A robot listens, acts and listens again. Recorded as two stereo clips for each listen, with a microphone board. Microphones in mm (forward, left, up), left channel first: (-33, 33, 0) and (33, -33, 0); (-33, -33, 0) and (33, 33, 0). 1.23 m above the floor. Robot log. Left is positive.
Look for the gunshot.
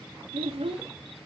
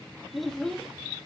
cmd idle
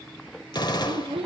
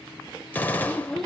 note: The gunshot: 155° left.
cmd yaw +155
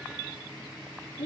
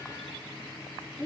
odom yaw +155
end: Facing where the gunshot came from. I can't hear it now.